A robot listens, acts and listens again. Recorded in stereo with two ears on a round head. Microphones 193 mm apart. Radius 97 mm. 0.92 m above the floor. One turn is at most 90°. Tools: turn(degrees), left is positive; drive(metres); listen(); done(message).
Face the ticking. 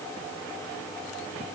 listen()
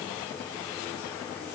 listen()
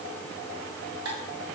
turn(degrees=-65)
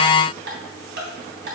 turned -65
turn(degrees=-50)
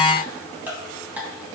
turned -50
turn(degrees=-10)
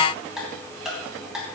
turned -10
done("Facing the ticking, 2 to 4 m away.")